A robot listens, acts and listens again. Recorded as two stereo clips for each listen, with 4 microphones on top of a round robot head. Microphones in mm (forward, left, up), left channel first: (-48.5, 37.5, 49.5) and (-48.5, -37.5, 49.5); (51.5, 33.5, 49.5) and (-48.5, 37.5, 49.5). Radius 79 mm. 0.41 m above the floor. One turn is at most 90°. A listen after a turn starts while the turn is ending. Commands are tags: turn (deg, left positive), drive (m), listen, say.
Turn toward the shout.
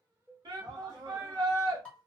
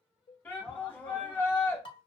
<turn deg="-75"/>
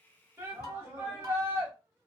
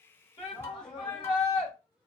<turn deg="-35"/>
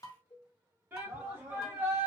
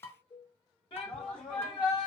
<turn deg="-30"/>
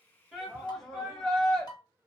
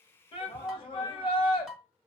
<say>Found it: a shout, straight ahead, 1 to 2 m away.</say>